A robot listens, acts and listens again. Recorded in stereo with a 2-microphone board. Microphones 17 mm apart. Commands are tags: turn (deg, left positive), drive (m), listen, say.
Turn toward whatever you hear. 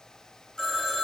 <turn deg="35"/>
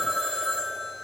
<turn deg="110"/>
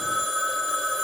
<turn deg="30"/>
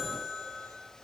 <turn deg="-15"/>
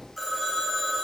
<say>Found it: a phone ringing, straight ahead.</say>